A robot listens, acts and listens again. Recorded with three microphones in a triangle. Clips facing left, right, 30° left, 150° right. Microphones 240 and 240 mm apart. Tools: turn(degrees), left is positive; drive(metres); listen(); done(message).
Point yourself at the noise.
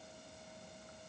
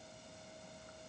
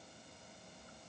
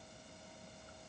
listen()
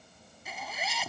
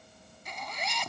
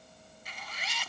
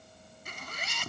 turn(degrees=175)
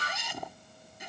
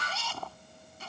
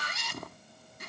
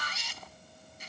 turn(degrees=20)
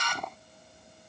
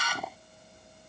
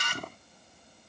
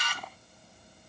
done("Found it: a zipper, straight ahead.")